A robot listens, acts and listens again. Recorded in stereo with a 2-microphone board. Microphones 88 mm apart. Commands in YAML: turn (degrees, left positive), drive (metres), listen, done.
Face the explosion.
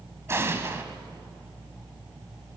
turn: -25
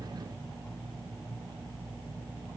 listen: true
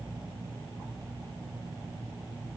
done: "I heard an explosion, but can't make it out now. It was about straight ahead or 130° right."